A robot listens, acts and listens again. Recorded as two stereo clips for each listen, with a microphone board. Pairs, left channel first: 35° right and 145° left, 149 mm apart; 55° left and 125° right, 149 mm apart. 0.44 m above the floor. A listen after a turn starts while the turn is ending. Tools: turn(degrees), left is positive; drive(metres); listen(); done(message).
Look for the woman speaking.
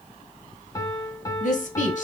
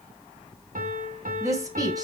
turn(degrees=-60)
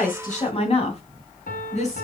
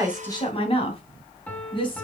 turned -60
done("Found it: a woman speaking, straight ahead.")